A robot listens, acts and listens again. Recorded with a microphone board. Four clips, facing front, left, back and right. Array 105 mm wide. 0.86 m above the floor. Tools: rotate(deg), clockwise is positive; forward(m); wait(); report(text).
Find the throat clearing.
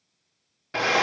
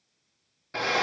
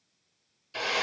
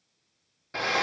wait()
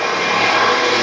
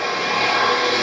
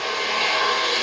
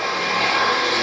wait()
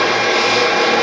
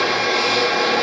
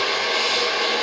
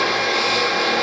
report("I can't make out throat clearing, only a drill.")